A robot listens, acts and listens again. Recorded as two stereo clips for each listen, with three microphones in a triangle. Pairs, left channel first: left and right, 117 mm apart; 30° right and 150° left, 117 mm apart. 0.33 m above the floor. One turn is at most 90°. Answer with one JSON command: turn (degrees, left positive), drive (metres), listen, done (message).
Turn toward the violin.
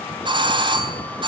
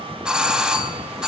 {"listen": true}
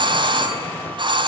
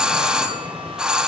{"listen": true}
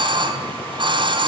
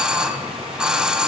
{"done": "I can't make out a violin to turn to."}